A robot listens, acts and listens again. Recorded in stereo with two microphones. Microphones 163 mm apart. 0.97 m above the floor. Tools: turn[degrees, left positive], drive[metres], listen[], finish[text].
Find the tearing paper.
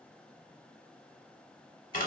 Action: listen[]
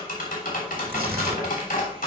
Thought: The tearing paper: about 65° right or 115° right.
Action: turn[-65]
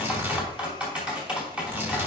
Thought: So it is at 15° right.
Action: turn[-15]
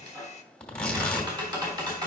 Action: finish[Found it: tearing paper, straight ahead.]